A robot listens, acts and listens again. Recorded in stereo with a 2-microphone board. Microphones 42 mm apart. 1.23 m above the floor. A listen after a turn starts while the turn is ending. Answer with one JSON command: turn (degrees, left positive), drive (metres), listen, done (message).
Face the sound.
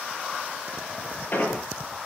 {"turn": 45}
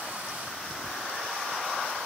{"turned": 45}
{"listen": true}
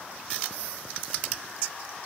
{"done": "I heard an explosion, but can't make it out now. It was about straight ahead or 90° left."}